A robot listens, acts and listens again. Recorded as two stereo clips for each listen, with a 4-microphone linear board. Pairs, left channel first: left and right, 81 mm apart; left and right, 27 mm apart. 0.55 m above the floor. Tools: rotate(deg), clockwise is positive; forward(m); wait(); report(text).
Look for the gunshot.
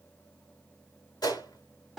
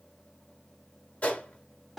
rotate(-60)
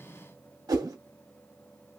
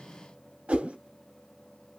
wait()
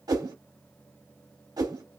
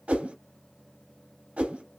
report("I heard a gunshot, but can't make it out now. It was about straight ahead or 60° left.")